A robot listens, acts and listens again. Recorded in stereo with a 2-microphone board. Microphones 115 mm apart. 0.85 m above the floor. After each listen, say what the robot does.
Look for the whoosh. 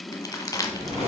Turn 75° right.
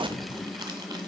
Keep listening.
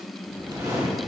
Turn 30° right.
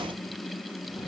Keep listening.
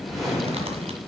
Facing the whoosh, 2 to 4 m away.